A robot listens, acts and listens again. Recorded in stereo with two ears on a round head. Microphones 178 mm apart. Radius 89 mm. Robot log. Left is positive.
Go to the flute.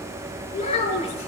cmd idle
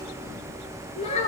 cmd idle
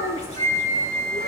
note: The flute: about 45° right or 135° right.
cmd yaw -45
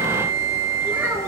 note: So it is at 90° right.
cmd yaw -90
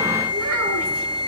cmd fwd 1.0
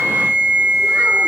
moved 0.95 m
note: The flute is now 10° right.
cmd yaw -10
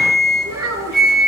cmd fwd 1.0
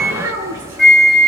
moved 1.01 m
cmd fwd 1.0
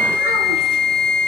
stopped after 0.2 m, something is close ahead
end: Arrived at the flute, straight ahead.